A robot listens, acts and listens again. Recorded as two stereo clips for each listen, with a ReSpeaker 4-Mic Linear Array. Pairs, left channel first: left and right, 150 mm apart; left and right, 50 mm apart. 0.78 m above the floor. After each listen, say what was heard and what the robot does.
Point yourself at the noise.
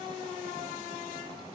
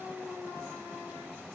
Keep listening.
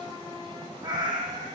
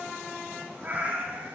The cat meowing: about 30° right or 150° right. Turn 30° right.
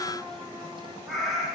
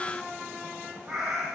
Facing the cat meowing.